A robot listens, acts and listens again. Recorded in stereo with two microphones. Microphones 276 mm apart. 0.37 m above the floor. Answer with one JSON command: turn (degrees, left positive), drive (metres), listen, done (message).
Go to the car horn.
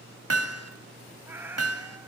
{"listen": true}
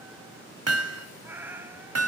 {"listen": true}
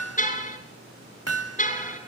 {"turn": 30}
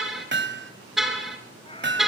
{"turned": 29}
{"drive": 1.0}
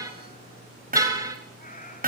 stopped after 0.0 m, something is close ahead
{"turn": -10}
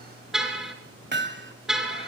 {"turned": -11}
{"done": "Something is in my way. I am facing the car horn but have not reached it."}